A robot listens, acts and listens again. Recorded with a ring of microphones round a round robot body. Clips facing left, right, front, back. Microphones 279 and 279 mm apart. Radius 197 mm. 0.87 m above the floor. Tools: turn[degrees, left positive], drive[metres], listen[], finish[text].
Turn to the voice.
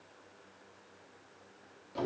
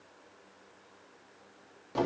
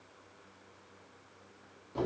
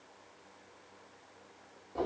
Action: listen[]
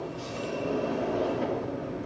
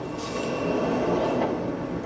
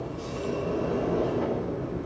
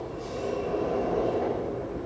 Action: listen[]
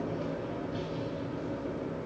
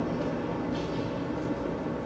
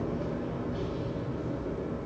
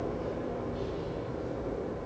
Action: finish[I can't make out anyone speaking to turn to.]